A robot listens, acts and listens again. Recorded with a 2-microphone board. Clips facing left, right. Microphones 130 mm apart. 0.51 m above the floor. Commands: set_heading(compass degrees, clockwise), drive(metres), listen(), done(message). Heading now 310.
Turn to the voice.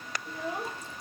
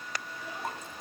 set_heading(250)
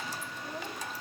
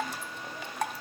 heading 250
listen()
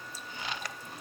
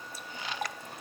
listen()
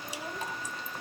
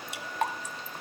done("I heard a child speaking, but can't make it out now. It was about straight ahead or 60° left.")